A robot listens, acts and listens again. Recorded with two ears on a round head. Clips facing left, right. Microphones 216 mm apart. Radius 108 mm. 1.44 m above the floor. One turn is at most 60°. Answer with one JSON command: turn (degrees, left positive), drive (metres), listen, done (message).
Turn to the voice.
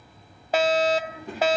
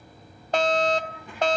{"turn": 30}
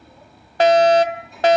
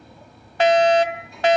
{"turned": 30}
{"done": "Facing the child speaking."}